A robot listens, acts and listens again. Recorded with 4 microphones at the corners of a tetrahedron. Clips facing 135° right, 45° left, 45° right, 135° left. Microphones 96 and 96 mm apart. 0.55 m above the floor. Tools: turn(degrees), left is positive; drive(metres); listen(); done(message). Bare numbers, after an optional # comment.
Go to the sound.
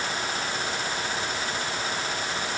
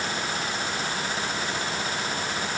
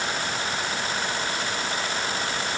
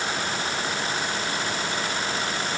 listen()
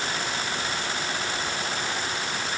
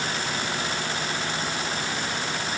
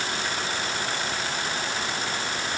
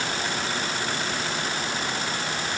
listen()
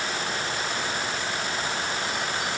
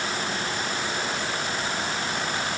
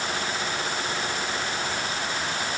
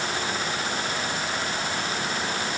done("I can't make out anything.")